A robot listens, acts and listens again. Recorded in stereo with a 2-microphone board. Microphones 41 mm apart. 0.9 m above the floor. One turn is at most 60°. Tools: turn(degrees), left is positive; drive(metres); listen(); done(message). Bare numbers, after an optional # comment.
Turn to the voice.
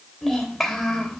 turn(30)
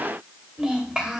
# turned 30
# So it is at 20° right.
turn(-20)
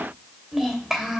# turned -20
# The child speaking is now 10° right.
turn(-10)
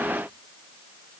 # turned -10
listen()
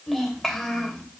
done("Found it: a child speaking, straight ahead, 2 to 4 m away.")